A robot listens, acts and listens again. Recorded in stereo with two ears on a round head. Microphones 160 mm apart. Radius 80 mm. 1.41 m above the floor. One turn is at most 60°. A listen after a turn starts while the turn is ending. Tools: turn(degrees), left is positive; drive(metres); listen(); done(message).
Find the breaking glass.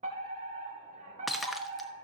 turn(degrees=30)
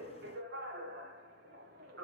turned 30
listen()
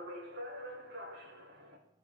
done("I heard breaking glass, but can't make it out now. It was about 30° right or 150° left.")